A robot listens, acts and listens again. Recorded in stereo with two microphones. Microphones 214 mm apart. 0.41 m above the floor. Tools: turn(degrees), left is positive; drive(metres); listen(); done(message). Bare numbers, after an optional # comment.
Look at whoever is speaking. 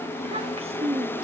# The child speaking: about 25° right or 155° right.
turn(-25)
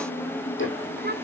# So it is at 125° right.
turn(-125)
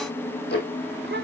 listen()
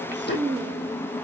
# The child speaking is now 60° right.
turn(-60)
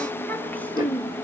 # The child speaking is now 10° left.
turn(10)
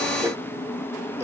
listen()
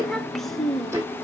done("Found it: a child speaking, straight ahead, under 1 m away.")